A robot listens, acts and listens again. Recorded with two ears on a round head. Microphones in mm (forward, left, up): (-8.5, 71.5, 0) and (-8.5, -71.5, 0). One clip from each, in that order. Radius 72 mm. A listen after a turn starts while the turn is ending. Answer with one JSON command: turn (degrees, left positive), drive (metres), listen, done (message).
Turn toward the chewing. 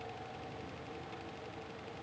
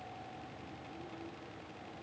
{"listen": true}
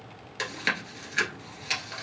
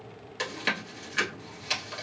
{"turn": 25}
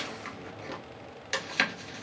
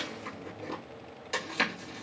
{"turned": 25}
{"turn": 130}
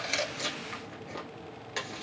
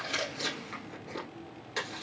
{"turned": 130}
{"turn": 15}
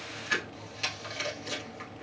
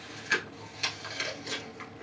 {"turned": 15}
{"done": "Facing the chewing."}